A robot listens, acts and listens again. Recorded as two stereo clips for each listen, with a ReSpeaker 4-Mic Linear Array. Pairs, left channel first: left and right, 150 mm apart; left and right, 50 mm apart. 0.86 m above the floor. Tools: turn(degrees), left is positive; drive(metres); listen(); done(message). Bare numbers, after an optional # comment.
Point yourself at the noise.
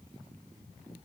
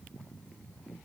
listen()
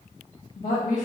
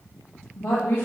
# The woman speaking: about 55° left or 125° left.
turn(55)
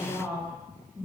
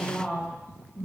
# So it is at 20° right.
turn(-20)
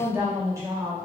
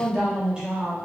# The woman speaking is now 25° right.
turn(-25)
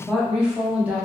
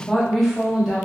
# The woman speaking is now 10° right.
turn(-10)
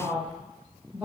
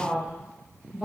# The woman speaking is now 10° right.
turn(-10)
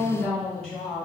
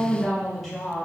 done("Found it: a woman speaking, straight ahead, 1 to 2 m away.")